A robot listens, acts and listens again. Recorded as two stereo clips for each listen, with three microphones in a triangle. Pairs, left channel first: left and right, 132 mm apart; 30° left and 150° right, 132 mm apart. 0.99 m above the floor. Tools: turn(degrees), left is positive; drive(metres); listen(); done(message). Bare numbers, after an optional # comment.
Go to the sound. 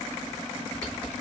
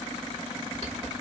# The typing on a keyboard: 175° left.
turn(175)
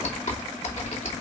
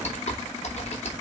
# The typing on a keyboard is now 60° left.
turn(60)
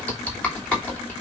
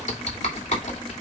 # The typing on a keyboard is now 10° left.
turn(10)
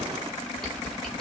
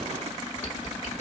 drive(1.0)
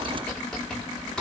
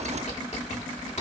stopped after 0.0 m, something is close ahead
done("Something is in my way. I am facing the typing on a keyboard but have not reached it.")